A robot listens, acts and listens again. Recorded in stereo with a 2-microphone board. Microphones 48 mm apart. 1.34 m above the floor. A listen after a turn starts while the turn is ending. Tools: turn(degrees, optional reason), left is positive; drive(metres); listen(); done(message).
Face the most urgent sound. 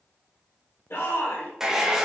turn(degrees=60, reason="The shout: about 60° left or 120° left.")
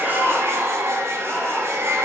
listen()
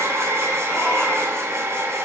listen()
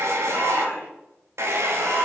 turn(degrees=60, reason="So it is at 60° left.")
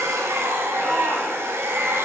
turn(degrees=15, reason="The shout is now 15° left.")
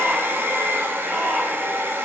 listen()
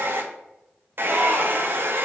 listen()
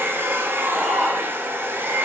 done("I heard a shout from this way, but can't make it out now.")